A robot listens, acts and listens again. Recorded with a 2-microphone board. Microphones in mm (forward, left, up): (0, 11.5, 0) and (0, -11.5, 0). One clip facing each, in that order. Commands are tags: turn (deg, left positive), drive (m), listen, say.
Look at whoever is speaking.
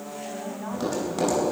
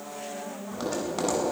<turn deg="90"/>
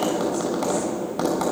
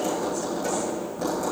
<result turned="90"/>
<listen/>
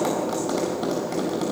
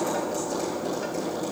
<listen/>
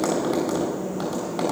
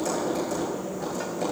<say>I heard a woman speaking from this way, but can't make it out now.</say>